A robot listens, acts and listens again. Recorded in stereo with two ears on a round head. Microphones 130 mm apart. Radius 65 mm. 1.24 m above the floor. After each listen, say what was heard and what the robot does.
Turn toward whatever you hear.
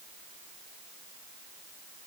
Keep listening.
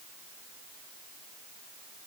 Keep listening.
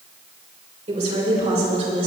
The woman speaking: about 45° right or 135° right. Turn 45° right.
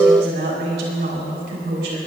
So it is at 85° right. Turn 85° right.
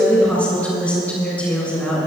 The woman speaking is now 10° left. Turn 10° left.
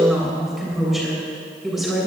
Facing the woman speaking, over 4 m away.